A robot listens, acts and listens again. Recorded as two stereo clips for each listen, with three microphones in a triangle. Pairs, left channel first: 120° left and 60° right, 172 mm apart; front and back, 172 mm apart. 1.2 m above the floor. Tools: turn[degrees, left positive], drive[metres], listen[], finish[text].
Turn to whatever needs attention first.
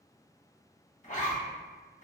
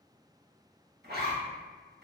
Action: listen[]
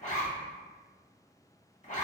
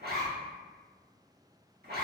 Action: listen[]
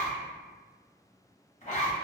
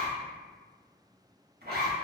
Action: finish[I can't make out anything urgent, only a zipper.]